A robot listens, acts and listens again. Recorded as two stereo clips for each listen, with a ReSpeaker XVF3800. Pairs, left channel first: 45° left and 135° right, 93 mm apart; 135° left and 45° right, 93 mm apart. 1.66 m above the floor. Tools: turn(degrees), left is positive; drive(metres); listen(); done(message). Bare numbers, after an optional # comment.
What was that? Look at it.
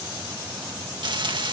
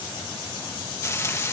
# The frying: 165° right.
turn(-165)
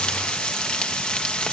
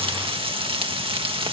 # The frying is now 35° right.
turn(-35)
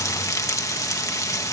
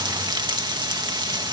done("Found it: frying, straight ahead.")